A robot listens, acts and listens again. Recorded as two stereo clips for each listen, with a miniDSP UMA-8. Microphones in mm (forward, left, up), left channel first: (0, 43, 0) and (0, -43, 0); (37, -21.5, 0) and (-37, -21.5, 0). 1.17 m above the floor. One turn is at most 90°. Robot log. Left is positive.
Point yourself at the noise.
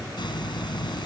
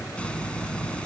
note: The hiss: 75° left.
cmd yaw +75
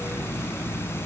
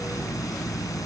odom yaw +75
note: The hiss is now 30° left.
cmd yaw +30
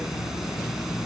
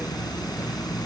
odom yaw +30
end: Facing the hiss.